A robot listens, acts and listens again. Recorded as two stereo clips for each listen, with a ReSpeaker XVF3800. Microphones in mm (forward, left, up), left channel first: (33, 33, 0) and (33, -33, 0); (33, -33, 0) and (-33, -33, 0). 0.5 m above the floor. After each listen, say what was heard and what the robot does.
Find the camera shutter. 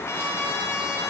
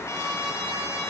Keep listening.
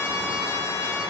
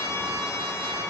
Keep listening.
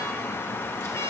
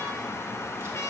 I can't make out a camera shutter, only a trumpet.